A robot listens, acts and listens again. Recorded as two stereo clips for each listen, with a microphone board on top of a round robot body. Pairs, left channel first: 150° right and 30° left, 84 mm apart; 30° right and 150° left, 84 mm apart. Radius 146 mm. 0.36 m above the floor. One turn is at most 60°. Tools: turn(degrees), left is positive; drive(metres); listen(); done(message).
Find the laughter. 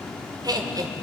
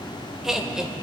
turn(degrees=60)
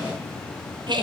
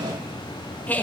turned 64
turn(degrees=40)
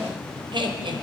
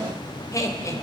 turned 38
turn(degrees=20)
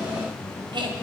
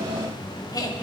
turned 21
turn(degrees=10)
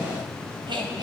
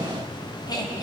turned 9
turn(degrees=10)
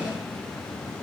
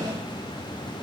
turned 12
listen()
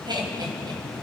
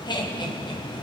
done("Facing the laughter.")